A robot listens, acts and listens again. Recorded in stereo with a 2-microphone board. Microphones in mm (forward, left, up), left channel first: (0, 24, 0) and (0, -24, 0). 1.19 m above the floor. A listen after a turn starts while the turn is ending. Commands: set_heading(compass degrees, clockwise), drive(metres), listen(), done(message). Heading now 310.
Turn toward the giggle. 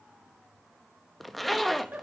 set_heading(350)
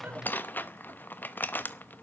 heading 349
listen()
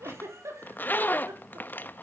set_heading(89)
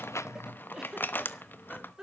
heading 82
set_heading(92)
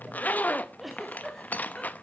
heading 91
done("Found it: a giggle, straight ahead.")